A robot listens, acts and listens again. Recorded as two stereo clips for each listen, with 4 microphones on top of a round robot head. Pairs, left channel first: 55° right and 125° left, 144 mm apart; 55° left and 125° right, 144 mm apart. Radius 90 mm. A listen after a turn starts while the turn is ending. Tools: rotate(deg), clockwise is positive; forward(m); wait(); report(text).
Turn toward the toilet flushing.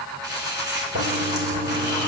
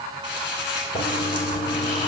rotate(-115)
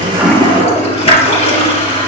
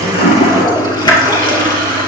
report("Facing the toilet flushing.")